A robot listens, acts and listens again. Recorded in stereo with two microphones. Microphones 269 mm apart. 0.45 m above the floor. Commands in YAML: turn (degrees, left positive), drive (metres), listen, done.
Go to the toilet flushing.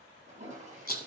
turn: -30
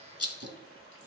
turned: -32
turn: -120
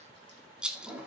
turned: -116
drive: 1.0
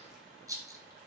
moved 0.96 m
listen: true
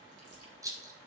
listen: true
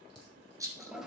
drive: 1.0
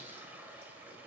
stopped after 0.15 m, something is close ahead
done: "Arrived at the toilet flushing, straight ahead."